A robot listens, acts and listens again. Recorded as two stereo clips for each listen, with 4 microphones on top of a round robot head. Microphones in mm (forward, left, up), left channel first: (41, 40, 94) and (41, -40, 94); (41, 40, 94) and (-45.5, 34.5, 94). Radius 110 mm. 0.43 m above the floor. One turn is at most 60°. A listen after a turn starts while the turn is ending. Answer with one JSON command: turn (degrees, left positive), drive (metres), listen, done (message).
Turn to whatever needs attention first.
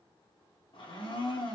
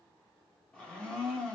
{"listen": true}
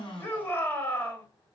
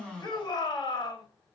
{"turn": 30}
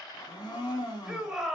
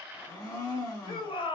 {"done": "Facing the shout."}